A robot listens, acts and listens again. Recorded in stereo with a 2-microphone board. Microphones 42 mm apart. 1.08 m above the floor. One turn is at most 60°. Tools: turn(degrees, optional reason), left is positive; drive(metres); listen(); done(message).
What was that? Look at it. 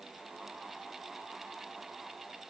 listen()
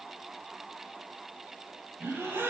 turn(degrees=-60)
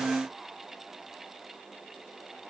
turn(degrees=-30, reason="Nothing new. It was at 30° right.")
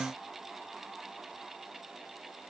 done("Facing where the gasp came from. I can't hear it now.")